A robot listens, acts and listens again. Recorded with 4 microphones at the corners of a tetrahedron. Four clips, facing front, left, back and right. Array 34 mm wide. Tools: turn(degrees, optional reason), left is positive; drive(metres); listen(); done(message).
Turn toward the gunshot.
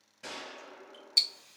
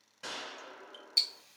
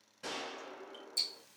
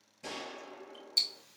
turn(degrees=95, reason="The gunshot: 95° left.")
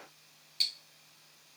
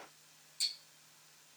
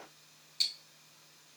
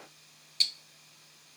done("Facing where the gunshot came from. I can't hear it now.")